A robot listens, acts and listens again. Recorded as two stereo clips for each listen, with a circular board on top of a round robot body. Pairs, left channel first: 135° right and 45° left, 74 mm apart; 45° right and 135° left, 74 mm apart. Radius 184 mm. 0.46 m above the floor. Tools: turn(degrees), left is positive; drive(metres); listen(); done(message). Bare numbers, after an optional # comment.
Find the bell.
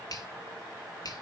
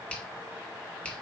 listen()
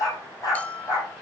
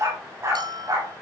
# The bell: 150° left.
turn(150)
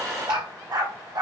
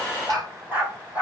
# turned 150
listen()
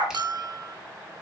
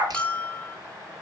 # The bell is now 30° left.
turn(30)
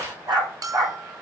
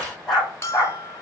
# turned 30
# The bell is now 10° left.
turn(10)
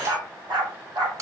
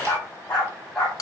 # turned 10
done("Facing the bell.")